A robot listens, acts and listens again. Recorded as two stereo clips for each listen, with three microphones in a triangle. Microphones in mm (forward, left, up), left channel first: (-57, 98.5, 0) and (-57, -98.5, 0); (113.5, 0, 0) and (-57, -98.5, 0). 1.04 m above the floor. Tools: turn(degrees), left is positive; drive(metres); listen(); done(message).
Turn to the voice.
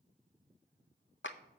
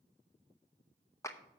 listen()
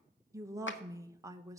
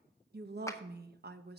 turn(degrees=-165)
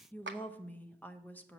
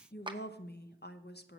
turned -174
turn(degrees=10)
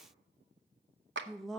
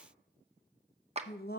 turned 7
done("Found it: a woman speaking, straight ahead, under 1 m away.")